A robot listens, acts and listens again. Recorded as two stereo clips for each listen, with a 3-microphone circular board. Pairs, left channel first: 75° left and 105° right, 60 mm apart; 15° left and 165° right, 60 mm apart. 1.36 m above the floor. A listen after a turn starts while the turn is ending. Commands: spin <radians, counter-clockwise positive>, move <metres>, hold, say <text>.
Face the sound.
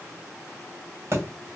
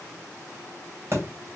spin -2.36
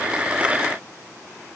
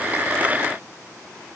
say Facing where the thud came from. I can't hear it now.